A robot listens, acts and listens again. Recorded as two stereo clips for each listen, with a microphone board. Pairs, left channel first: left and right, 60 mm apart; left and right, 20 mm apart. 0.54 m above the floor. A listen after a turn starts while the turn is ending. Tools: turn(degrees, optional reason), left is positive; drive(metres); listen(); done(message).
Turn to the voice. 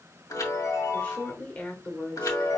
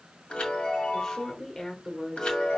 turn(degrees=25, reason="The woman speaking: about 25° left or 155° left.")
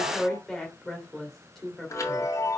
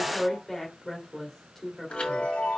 done("Facing the woman speaking.")